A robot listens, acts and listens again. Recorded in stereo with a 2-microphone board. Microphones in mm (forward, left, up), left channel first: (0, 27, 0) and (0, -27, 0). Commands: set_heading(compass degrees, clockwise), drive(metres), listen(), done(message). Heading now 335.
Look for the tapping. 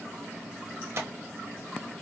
set_heading(20)
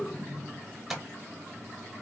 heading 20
done("Facing the tapping.")